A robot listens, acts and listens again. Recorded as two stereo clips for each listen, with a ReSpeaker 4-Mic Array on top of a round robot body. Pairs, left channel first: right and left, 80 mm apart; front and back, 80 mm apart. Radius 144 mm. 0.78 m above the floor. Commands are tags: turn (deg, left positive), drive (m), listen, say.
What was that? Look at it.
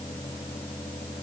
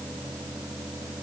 <listen/>
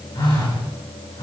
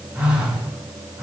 <turn deg="-110"/>
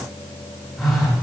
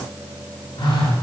<say>Facing the phone buzzing.</say>